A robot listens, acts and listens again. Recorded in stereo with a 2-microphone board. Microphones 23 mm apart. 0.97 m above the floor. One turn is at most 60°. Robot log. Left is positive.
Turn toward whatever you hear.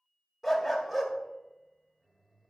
cmd yaw +30
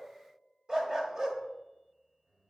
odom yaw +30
note: So it is at 30° right.
cmd yaw -30
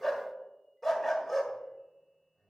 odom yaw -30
end: Facing the dog barking.